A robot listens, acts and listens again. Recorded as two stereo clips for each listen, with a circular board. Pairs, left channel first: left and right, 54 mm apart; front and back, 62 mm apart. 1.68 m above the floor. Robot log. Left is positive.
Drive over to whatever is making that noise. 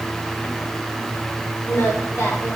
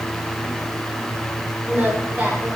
note: The singing: 120° left.
cmd yaw +120
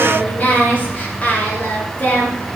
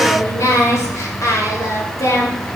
note: The singing is now 30° left.
cmd yaw +30
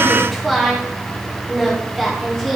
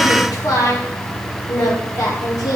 cmd fwd 1.0
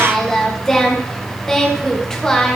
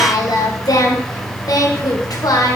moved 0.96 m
note: The singing is now 10° left.
cmd yaw +10
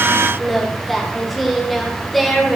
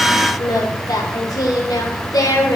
cmd fwd 1.0
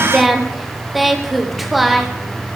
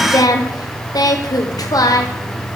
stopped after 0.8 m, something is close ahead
end: Arrived at the singing, straight ahead.